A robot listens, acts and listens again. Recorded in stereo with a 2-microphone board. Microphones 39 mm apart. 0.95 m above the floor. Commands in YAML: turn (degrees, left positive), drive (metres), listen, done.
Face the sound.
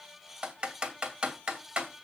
turn: -25
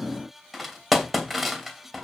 done: "Found it: typing on a keyboard, straight ahead, 2 to 4 m away."